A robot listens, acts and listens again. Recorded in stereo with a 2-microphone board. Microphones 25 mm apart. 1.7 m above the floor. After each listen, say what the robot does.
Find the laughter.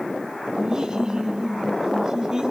Turn 25° right.
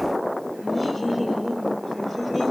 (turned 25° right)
Turn 10° left.
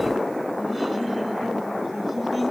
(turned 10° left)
Found it: laughter, straight ahead, over 4 m away.